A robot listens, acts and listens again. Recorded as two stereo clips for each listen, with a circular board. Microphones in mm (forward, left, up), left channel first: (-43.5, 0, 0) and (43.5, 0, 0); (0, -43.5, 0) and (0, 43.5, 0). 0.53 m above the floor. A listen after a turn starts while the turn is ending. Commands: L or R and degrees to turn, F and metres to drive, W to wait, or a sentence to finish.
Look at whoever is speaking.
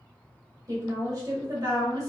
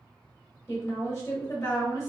R30
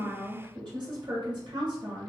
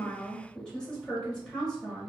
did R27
Found it: a woman speaking, straight ahead.